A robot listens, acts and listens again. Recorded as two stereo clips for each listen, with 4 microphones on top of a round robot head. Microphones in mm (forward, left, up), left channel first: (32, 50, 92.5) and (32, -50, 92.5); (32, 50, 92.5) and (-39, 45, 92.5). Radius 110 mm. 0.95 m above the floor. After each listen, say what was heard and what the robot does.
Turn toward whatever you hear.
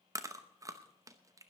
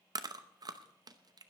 The chewing: 150° right. Turn 150° right.
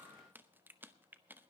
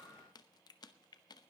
The chewing is now 20° right. Turn 20° right.
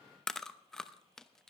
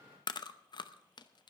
Facing the chewing.